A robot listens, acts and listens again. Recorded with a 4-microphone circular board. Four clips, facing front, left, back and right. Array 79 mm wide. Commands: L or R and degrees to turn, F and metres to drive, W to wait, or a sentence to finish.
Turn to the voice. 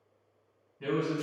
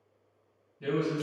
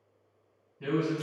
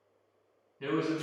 R70
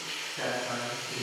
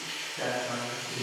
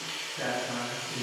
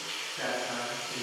L15
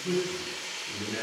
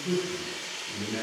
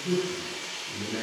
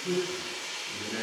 Facing the man speaking, 1 to 2 m away.